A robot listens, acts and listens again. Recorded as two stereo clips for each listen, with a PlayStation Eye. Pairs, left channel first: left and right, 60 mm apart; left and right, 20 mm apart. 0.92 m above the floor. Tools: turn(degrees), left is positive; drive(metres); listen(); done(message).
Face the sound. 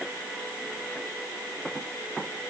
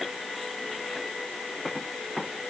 listen()
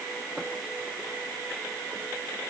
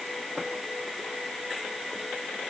listen()
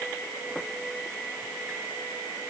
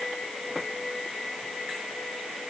done("I can't make out anything.")